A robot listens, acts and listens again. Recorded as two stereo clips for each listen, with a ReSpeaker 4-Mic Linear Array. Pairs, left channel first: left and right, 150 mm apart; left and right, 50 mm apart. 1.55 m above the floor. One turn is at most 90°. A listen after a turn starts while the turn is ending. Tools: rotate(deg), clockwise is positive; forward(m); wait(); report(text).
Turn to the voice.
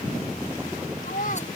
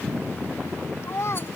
rotate(-60)
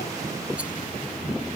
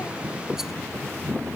wait()
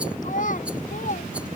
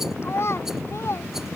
rotate(-60)
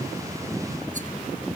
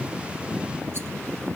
wait()
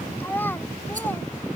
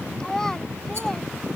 rotate(-10)
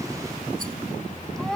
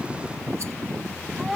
report("Found it: a child speaking, straight ahead.")